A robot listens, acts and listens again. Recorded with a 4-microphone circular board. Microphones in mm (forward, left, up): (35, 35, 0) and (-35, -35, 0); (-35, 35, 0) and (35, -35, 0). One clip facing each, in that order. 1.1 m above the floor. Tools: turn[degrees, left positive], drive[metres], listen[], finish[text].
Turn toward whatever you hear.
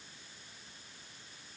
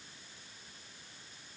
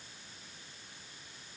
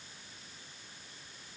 Action: listen[]
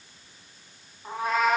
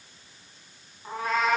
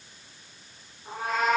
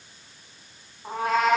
Thought: The cat meowing: 40° right.
Action: turn[-40]
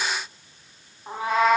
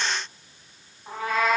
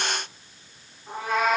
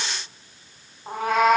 Thought: The cat meowing is now 25° right.
Action: turn[-25]
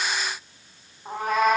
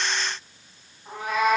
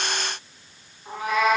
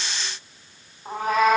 Action: finish[Found it: a cat meowing, straight ahead.]